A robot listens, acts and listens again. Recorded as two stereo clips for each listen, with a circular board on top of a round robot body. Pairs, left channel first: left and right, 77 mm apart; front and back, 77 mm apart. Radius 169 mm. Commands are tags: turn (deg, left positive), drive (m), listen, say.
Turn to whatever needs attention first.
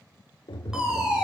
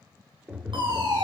<turn deg="-170"/>
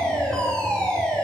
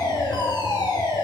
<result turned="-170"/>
<turn deg="10"/>
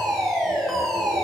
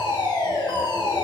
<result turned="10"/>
<say>Facing the fire alarm, over 4 m away.</say>